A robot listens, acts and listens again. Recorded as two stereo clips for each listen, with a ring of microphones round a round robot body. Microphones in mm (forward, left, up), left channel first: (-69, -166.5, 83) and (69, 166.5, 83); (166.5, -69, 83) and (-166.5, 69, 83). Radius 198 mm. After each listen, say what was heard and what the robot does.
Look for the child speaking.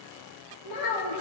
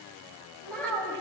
The child speaking: 105° right. Turn 105° right.
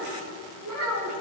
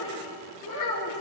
The child speaking is now 20° left. Turn 20° left.
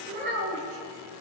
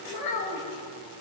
The child speaking is now 10° left. Turn 10° left.
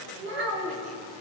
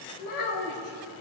The child speaking is now 15° left. Turn 15° left.
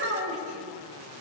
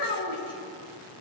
The child speaking is now 10° left. Turn 10° left.
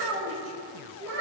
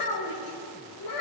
The child speaking is now 10° left. Turn 10° left.
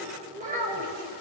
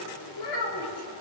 Found it: a child speaking, straight ahead.